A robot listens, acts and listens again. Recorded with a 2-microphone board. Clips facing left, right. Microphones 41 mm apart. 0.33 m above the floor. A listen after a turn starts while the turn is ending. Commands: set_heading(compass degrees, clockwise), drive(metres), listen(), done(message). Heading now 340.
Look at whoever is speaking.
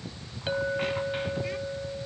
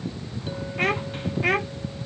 set_heading(40)
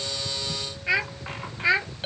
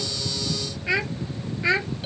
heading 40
done("Found it: a child speaking, straight ahead.")